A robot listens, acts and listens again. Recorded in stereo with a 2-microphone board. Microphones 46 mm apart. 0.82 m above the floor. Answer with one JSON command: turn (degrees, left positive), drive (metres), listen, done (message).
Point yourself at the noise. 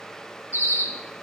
{"turn": 70}
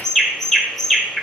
{"done": "Facing the bird, 1 to 2 m away."}